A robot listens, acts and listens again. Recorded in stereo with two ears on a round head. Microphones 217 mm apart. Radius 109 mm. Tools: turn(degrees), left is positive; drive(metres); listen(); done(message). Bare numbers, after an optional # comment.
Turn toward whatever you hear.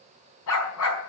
# The dog barking: about 65° left or 115° left.
turn(65)
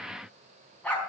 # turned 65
done("Facing the dog barking, over 4 m away.")